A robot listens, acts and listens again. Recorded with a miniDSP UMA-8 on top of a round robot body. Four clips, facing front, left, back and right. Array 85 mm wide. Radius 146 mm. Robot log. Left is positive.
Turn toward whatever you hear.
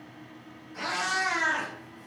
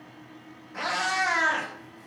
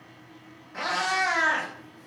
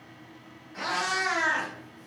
note: The cat meowing: 135° left.
cmd yaw +135
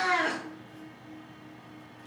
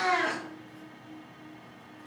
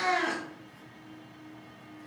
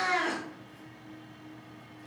note: The cat meowing is now 20° left.
cmd yaw +20
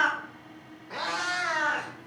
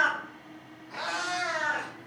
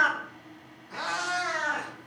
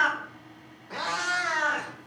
note: The cat meowing is now 45° right.
cmd yaw -45
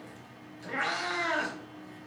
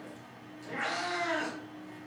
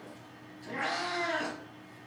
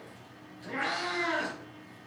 note: The cat meowing is now 10° right.
cmd yaw -10
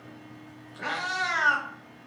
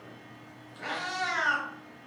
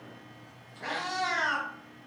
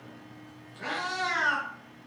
end: Found it: a cat meowing, straight ahead.